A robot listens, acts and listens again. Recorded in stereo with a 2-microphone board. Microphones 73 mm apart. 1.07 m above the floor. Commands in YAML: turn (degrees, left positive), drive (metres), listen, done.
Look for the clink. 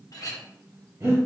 turn: 55
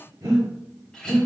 turn: 10
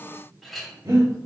done: "Facing the clink, under 1 m away."